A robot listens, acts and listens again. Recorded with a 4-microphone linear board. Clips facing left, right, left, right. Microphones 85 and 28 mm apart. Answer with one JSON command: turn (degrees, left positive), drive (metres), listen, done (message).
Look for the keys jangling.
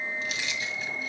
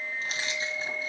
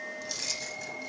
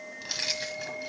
{"turn": -35}
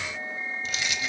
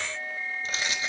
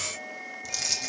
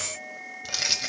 {"turn": -35}
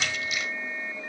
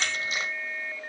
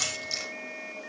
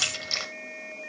{"turn": -35}
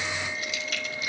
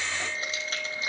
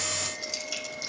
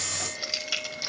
{"turn": -30}
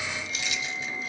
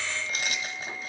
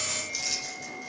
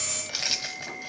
{"turn": -45}
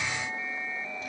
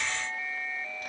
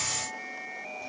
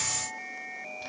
{"listen": true}
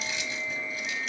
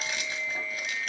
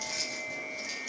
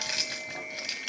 {"turn": -55}
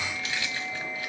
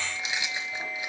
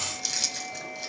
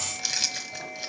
{"turn": -20}
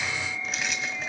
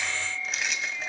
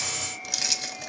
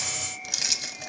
{"done": "Facing the keys jangling."}